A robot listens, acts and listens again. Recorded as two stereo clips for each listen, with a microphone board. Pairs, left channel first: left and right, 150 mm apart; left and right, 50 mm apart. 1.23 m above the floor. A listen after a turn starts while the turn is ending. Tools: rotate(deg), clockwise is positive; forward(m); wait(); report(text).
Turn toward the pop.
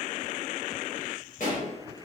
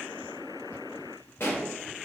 rotate(-65)
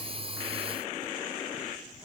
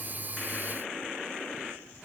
wait()
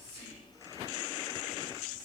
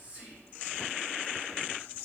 report("I heard a pop, but can't make it out now. It was about straight ahead or 50° left.")